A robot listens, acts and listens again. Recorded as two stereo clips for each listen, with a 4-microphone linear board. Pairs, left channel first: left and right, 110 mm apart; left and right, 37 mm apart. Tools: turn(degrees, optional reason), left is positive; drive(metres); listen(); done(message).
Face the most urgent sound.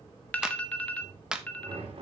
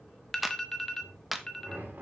turn(degrees=30)
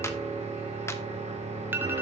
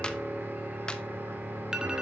turn(degrees=-20, reason="So it is at 20° right.")
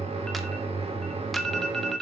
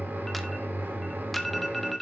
done("Found it: an alarm, straight ahead.")